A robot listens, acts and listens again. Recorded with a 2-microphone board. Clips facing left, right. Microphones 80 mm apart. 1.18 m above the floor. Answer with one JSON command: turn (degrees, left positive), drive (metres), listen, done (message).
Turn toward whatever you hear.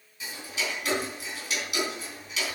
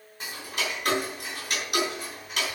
{"turn": -50}
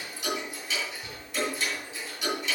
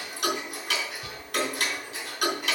{"turn": -80}
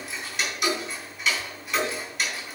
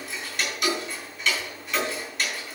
{"done": "Facing the ticking, 2 to 4 m away."}